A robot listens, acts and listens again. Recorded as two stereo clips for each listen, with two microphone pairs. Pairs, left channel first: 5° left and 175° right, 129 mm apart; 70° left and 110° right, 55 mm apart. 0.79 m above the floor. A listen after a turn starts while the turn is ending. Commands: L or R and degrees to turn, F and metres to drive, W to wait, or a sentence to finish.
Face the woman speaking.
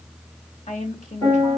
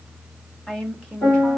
Found it: a woman speaking, straight ahead.